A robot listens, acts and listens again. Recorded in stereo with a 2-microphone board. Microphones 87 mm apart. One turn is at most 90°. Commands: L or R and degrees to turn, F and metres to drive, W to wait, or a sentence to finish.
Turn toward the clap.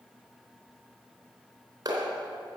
R50
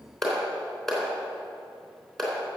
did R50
Facing the clap.